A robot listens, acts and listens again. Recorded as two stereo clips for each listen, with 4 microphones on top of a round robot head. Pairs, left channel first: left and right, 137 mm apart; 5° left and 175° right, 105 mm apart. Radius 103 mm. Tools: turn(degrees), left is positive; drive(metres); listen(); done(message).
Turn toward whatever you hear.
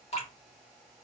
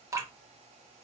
turn(degrees=130)
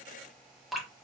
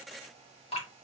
done("Facing the dripping.")